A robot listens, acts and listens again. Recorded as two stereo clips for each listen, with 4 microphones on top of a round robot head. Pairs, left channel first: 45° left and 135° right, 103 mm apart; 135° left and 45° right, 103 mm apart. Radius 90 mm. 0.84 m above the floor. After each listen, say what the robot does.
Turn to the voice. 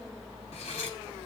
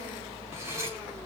Keep listening.
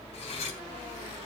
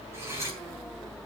Keep listening.
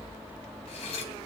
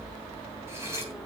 I can't make out anyone speaking to turn to.